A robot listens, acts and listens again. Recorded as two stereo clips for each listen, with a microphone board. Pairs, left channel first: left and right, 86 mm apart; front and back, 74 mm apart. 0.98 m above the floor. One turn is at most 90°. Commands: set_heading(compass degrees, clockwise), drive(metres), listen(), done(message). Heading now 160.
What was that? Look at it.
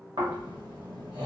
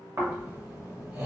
set_heading(250)
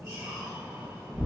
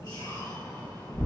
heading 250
set_heading(280)
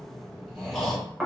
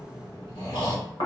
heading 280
done("Facing the snoring.")